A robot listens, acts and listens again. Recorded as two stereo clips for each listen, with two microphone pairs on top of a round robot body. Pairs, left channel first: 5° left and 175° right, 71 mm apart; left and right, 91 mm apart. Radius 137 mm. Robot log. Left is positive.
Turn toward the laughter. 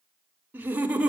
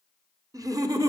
note: The laughter: 110° right.
cmd yaw -110
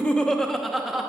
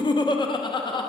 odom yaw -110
note: The laughter is now 105° left.
cmd yaw +105
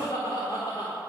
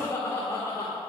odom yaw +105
note: The laughter is now 30° left.
cmd yaw +30
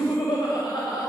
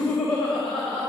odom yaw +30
note: The laughter is now 10° left.
cmd yaw +10
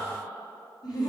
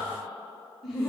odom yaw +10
end: Facing the laughter.